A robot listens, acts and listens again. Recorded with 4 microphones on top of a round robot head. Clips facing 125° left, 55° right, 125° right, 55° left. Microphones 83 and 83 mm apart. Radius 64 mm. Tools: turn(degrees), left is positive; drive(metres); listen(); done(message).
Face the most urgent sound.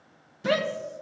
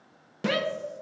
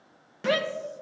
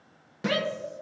turn(degrees=-175)
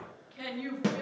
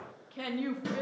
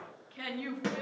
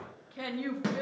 turn(degrees=-10)
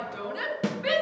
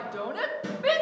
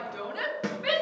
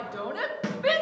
done("Facing the shout.")